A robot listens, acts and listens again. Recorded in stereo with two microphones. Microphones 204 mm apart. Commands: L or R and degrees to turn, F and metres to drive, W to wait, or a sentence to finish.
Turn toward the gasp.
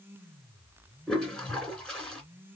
W
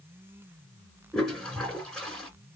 W
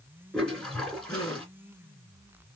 L30
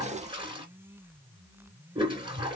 W
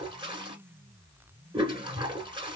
I heard a gasp, but can't make it out now. It was about 15° right or 135° left.